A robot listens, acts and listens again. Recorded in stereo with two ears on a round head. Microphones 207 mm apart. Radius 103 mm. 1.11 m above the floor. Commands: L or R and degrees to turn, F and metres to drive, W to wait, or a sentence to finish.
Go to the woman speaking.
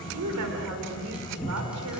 R90
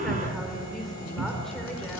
W
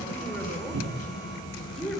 F1.0
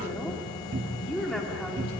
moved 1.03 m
F1.0
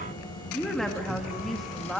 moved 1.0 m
F1.0
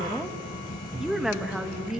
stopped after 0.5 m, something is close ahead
I am next to the woman speaking.